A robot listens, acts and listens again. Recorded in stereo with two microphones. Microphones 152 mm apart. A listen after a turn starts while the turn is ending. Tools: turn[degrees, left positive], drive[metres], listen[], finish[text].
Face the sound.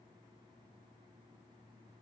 Action: listen[]
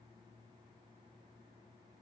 Action: listen[]
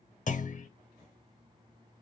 Thought: The clunk: about 55° left or 125° left.
Action: turn[55]
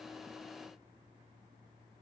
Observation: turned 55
Action: listen[]
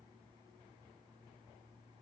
Action: finish[I heard a clunk, but can't make it out now. It was about straight ahead or 70° left.]